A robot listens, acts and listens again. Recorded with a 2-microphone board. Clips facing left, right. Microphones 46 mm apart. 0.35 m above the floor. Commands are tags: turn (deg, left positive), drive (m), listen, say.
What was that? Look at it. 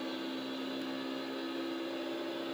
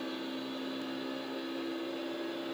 <listen/>
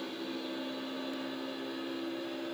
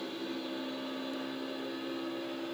<listen/>
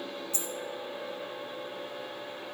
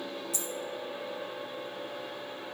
<turn deg="35"/>
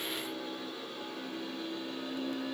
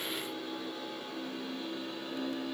<listen/>
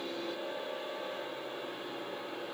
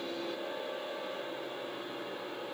<say>I heard a dropped coin, but can't make it out now. It was about straight ahead or 110° left.</say>